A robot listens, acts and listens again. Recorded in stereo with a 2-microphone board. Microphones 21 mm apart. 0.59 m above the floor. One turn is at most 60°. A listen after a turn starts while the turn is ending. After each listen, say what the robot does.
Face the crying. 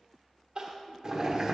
Turn 40° right.
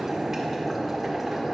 Keep listening.
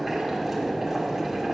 Keep listening.
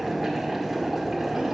I heard crying, but can't make it out now. It was about straight ahead or 100° right.